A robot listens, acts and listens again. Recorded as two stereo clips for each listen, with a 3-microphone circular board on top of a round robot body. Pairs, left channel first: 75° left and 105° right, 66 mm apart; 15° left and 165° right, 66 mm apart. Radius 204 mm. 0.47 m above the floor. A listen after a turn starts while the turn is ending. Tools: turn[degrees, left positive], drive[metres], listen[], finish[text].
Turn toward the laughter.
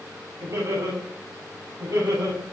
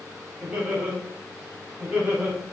Thought: The laughter: 95° right.
Action: turn[-95]
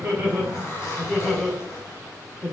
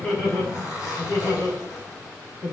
Action: finish[Facing the laughter, over 4 m away.]